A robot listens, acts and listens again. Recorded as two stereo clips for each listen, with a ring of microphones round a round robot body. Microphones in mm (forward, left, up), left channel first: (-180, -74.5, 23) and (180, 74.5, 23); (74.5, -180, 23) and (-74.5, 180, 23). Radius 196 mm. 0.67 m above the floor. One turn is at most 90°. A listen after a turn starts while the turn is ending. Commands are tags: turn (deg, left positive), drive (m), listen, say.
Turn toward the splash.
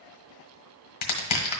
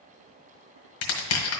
<listen/>
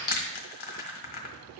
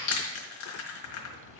<turn deg="-30"/>
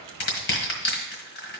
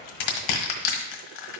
<say>I heard a splash from this way, but can't make it out now.</say>